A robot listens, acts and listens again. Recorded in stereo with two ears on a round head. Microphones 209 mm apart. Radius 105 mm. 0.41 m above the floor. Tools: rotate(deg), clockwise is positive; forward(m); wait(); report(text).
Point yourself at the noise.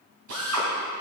rotate(70)
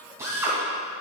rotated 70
rotate(15)
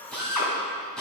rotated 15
report("Facing the drill, 2 to 4 m away.")